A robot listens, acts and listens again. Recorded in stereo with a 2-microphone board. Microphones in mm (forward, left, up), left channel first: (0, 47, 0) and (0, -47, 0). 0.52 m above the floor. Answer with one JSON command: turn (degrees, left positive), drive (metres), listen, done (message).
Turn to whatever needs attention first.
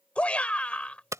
{"turn": 30}
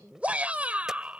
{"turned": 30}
{"turn": -15}
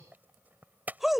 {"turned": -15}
{"done": "Found it: a shout, straight ahead."}